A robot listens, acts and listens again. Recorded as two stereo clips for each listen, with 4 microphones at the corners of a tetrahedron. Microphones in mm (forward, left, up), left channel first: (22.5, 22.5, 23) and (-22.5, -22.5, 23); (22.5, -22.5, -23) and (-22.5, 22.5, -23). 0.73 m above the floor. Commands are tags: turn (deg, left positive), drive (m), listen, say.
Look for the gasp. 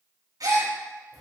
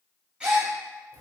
<turn deg="-150"/>
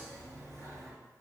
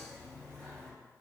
<say>I heard a gasp from this way, but can't make it out now.</say>